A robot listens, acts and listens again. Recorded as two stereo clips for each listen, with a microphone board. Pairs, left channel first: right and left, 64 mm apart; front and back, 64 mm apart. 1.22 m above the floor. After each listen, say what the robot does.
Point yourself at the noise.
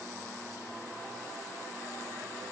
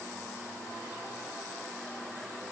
Keep listening.
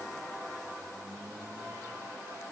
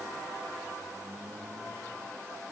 Keep listening.
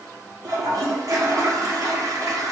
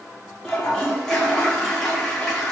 Turn 75° left.
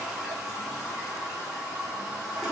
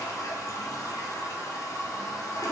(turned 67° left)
Turn 10° left.
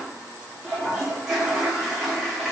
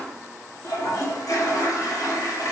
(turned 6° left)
Facing the toilet flushing.